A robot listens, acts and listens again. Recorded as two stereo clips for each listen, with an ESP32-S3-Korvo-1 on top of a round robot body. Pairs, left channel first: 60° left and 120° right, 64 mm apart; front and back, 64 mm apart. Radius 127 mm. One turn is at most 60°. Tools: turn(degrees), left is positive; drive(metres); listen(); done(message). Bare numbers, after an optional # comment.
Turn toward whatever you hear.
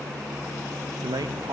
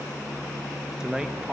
# The man speaking: 105° right.
turn(-60)
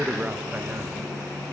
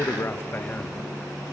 # The man speaking is now 50° right.
turn(-50)
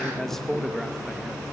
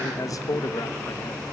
# The man speaking is now 30° right.
turn(-30)
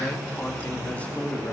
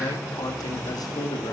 # The man speaking is now 10° right.
turn(-10)
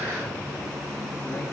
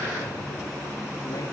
listen()
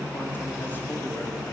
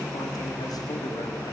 listen()
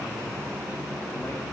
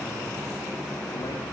done("Facing where the man speaking came from. I can't hear it now.")